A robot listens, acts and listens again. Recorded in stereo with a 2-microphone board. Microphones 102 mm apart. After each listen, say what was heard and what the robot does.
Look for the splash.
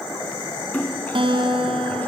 The splash: about 15° left or 165° left. Turn 15° left.
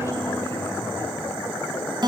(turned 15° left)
Keep listening.
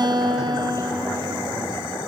I heard a splash, but can't make it out now. It was about straight ahead or 150° left.